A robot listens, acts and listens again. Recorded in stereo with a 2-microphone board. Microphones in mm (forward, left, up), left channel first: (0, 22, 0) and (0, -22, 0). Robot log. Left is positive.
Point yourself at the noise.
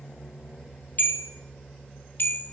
note: The bell: about 55° left or 125° left.
cmd yaw +55
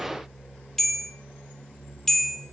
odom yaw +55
note: So it is at 10° left.
cmd yaw +10
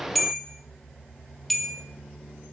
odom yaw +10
end: Facing the bell, 1 to 2 m away.